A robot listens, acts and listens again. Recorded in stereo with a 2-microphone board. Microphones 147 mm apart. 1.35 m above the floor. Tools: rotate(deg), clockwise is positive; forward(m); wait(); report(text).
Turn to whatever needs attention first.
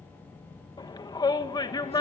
rotate(-25)
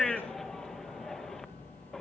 report("Facing the shout, 1 to 2 m away.")